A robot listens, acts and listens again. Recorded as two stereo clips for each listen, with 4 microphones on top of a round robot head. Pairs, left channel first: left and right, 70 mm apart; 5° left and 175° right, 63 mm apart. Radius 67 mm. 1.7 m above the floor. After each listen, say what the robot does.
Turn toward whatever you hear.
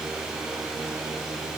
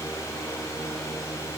Keep listening.
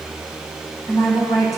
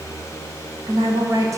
Turn 150° left.
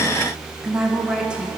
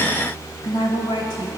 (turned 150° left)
Turn 15° right.
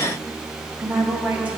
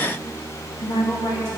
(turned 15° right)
Turn 20° right.
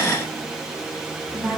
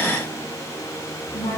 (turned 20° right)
Found it: a woman speaking, straight ahead, 1 to 2 m away.